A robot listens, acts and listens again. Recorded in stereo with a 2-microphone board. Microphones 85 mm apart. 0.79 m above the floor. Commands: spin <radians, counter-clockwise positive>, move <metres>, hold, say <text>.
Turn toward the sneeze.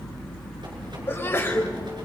spin 0.44
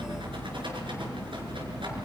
hold
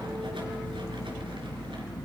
say I heard a sneeze, but can't make it out now. It was about straight ahead or 130° left.